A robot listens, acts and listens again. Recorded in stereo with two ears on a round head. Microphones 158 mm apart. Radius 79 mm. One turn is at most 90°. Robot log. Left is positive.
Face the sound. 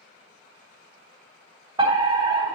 note: The fire alarm: about 25° right or 155° right.
cmd yaw -25
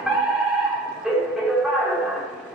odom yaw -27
end: Found it: a fire alarm, straight ahead.